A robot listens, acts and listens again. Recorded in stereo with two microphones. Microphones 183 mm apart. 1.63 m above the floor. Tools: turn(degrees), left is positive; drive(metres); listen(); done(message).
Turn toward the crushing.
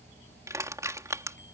turn(degrees=-15)
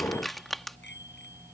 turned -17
done("Facing the crushing.")